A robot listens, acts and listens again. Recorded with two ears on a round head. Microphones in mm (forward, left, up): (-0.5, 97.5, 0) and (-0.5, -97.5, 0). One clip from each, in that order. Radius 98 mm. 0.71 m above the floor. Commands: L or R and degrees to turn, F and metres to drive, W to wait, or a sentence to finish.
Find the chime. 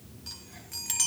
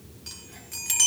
R30
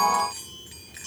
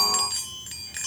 R145
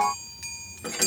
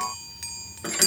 R20
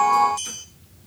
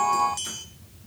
Facing the chime, 1 to 2 m away.